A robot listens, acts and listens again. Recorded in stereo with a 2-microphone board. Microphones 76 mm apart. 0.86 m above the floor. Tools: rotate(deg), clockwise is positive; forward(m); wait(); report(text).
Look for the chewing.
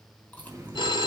rotate(-20)
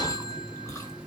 wait()
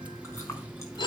wait()
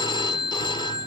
report("I heard chewing, but can't make it out now. It was about straight ahead or 140° left.")